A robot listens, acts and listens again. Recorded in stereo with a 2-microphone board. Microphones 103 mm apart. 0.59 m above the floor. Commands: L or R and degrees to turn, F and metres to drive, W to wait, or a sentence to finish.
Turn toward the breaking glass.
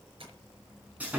W
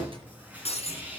L75
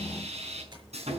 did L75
W
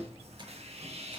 I heard breaking glass, but can't make it out now. It was about straight ahead or 30° left.